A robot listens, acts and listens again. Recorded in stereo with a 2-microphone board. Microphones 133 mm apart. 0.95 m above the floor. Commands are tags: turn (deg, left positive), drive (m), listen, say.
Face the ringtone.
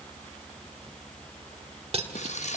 <listen/>
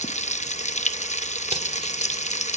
<listen/>
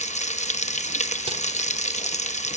<say>I can't make out a ringtone, only frying and cutlery clinking.</say>